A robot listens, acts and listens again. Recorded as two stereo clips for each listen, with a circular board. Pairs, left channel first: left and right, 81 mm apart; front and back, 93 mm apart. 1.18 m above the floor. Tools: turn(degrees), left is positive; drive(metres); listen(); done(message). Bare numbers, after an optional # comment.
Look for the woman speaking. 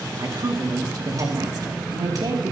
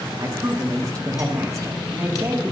# The woman speaking: 125° right.
turn(-125)
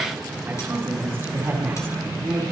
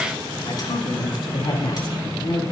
# The woman speaking is now 30° right.
turn(-30)
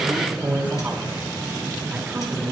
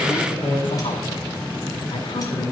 # The woman speaking is now 20° right.
turn(-20)
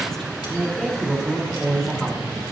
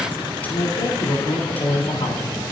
done("Facing the woman speaking.")